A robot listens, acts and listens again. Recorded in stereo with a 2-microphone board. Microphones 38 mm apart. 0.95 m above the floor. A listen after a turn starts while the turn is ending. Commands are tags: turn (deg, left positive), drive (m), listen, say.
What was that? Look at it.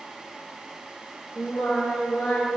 <turn deg="30"/>
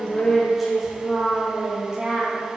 <turn deg="-30"/>
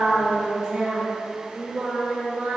<turn deg="-30"/>
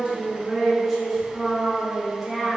<say>Found it: singing, straight ahead, 1 to 2 m away.</say>